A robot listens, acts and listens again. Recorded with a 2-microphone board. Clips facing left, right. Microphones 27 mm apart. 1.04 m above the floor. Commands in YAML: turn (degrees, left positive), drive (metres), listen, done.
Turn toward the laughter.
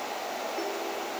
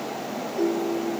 listen: true
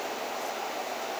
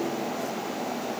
listen: true
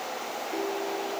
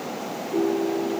done: "I can't make out laughter to turn to."